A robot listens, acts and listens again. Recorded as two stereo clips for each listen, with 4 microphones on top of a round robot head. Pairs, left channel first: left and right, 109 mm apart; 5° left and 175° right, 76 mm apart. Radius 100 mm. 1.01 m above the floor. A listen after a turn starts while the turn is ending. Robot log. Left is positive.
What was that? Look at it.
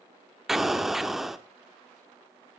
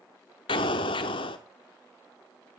end: Facing the explosion.